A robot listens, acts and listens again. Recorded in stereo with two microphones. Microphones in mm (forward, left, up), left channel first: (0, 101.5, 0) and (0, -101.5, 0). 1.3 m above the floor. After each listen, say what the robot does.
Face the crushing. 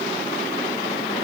Keep listening.
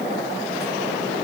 Keep listening.
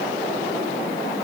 I can't make out crushing.